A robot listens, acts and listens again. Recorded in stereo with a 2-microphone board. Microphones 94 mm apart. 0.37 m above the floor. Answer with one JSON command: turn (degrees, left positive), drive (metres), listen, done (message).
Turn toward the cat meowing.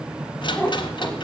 {"turn": 25}
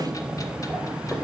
{"turn": 30}
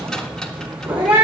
{"turn": -10}
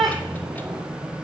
{"done": "Found it: a cat meowing, straight ahead."}